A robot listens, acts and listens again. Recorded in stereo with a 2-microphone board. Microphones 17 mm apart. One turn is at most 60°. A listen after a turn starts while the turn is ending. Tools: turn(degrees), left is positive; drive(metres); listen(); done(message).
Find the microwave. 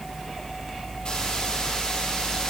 listen()
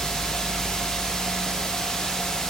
listen()
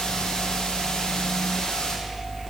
done("I can't make out a microwave, only a hiss.")